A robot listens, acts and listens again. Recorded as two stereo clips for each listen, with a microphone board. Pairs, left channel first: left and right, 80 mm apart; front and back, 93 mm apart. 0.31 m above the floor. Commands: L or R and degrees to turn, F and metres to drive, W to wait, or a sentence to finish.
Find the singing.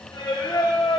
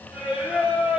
L100
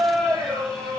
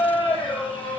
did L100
R10
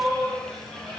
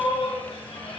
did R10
Facing the singing.